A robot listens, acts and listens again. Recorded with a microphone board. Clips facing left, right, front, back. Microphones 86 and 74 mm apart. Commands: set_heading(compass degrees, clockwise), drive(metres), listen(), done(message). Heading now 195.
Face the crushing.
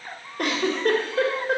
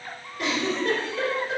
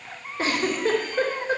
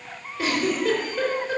listen()
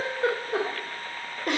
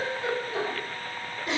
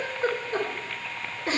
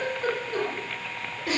listen()
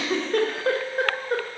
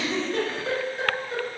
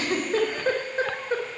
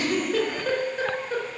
done("I can't make out crushing, only a giggle.")